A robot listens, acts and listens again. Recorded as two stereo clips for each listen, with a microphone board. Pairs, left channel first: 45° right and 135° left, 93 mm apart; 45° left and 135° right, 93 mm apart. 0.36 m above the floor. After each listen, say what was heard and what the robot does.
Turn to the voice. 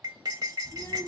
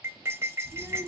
The child speaking: 80° right. Turn 80° right.
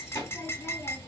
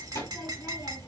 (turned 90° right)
The child speaking is now 10° left. Turn 10° left.
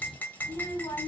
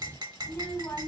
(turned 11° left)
Found it: a child speaking, straight ahead.